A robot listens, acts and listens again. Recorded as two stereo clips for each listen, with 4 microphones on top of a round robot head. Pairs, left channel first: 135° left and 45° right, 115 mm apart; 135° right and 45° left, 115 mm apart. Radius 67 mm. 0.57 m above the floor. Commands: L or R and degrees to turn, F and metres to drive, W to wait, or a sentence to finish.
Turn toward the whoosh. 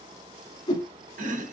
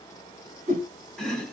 L80
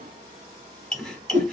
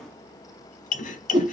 R10
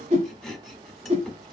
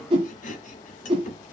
Facing the whoosh, 1 to 2 m away.